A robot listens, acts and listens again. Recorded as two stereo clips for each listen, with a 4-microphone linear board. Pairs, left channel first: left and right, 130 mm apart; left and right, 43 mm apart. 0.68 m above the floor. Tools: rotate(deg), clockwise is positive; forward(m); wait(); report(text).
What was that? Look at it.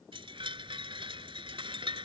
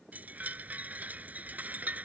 rotate(40)
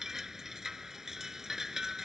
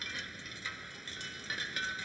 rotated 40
report("Found it: a chime, straight ahead.")